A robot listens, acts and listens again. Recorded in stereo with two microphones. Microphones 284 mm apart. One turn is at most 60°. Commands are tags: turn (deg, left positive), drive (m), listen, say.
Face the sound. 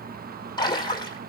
<turn deg="15"/>
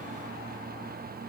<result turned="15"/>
<listen/>
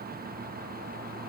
<say>I heard a splash, but can't make it out now. It was about straight ahead or 150° left.</say>